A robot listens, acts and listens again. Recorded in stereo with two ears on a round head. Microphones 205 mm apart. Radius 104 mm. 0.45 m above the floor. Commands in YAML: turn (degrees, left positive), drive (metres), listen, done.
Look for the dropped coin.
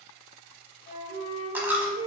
turn: -30
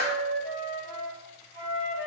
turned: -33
listen: true
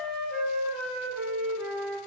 done: "I heard a dropped coin, but can't make it out now. It was about 25° left or 140° right."